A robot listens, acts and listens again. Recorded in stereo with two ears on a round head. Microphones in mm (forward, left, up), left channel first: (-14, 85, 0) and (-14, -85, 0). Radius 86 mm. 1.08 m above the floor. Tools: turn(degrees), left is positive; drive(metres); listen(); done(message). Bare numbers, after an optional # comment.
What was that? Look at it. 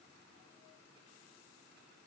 listen()
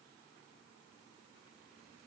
listen()
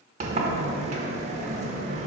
# The sliding door: about 35° right or 145° right.
turn(-35)
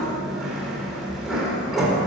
done("Facing the sliding door, 1 to 2 m away.")